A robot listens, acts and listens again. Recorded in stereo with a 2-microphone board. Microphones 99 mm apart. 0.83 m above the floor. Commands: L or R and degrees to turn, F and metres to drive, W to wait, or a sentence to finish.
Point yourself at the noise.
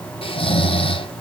L65
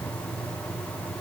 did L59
W
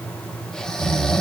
Facing the snoring, under 1 m away.